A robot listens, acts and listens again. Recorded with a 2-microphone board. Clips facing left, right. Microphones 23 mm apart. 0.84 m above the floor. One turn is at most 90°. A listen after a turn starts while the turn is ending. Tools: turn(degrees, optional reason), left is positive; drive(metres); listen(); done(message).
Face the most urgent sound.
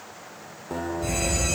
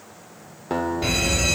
turn(degrees=-60, reason="The fire alarm: about 60° right or 120° right.")
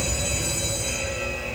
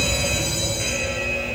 turn(degrees=-45, reason="So it is at 45° right.")
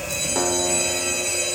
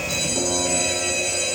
turn(degrees=-10, reason="The fire alarm is now 10° right.")
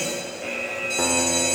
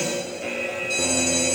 done("Found it: a fire alarm, straight ahead, 2 to 4 m away.")